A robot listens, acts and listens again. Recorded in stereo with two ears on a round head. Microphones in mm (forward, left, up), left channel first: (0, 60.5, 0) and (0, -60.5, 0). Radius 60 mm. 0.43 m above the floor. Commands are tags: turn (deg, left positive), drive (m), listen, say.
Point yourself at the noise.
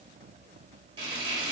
<turn deg="-35"/>
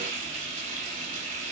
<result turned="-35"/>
<turn deg="-105"/>
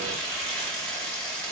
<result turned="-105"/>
<turn deg="10"/>
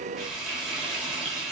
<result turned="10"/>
<say>Facing the frying.</say>